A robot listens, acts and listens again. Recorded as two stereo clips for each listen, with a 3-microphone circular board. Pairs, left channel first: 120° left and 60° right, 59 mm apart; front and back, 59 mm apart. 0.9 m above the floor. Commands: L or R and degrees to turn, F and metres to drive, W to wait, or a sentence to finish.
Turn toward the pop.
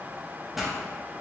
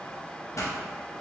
L25
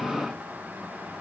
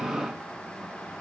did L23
I heard a pop from this way, but can't make it out now.